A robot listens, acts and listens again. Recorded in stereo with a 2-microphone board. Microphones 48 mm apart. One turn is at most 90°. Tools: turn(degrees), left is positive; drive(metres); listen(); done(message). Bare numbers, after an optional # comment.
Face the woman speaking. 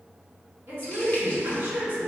# The woman speaking: about 35° right or 145° right.
turn(-35)
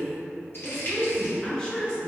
# So it is at 20° left.
turn(20)
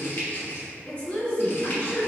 # The woman speaking is now 35° left.
turn(35)
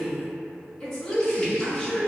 # The woman speaking is now 15° left.
turn(15)
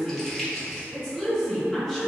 done("Facing the woman speaking, 1 to 2 m away.")